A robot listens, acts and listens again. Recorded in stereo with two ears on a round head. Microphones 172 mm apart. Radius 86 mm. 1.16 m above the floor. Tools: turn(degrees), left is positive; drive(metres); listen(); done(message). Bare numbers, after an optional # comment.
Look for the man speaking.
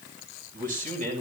# The man speaking: about 40° right or 140° right.
turn(-40)
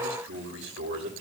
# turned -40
# So it is at 105° right.
turn(-105)
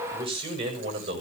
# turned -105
# The man speaking is now 30° right.
turn(-30)
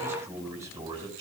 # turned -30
# The man speaking is now 20° right.
turn(-20)
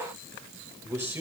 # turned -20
# The man speaking is now 10° right.
turn(-10)
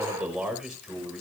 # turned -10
done("Found it: a man speaking, straight ahead, over 4 m away.")